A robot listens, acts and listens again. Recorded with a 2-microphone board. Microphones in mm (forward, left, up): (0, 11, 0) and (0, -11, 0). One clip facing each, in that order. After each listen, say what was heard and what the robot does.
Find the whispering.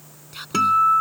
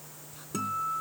Turn 90° left.
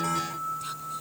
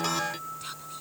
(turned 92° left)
Keep listening.
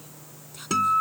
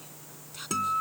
The whispering is now 10° right. Turn 10° right.
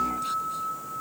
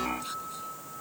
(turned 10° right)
Keep listening.
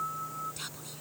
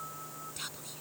Facing the whispering.